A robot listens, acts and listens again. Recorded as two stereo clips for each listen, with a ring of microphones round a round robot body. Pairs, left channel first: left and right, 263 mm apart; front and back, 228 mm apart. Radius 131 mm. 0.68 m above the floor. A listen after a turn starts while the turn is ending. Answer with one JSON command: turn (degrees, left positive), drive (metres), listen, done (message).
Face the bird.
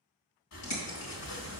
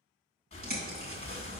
{"turn": 130}
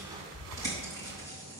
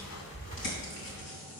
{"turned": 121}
{"turn": 10}
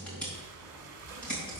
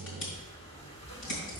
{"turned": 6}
{"done": "Found it: a bird, straight ahead, 2 to 4 m away."}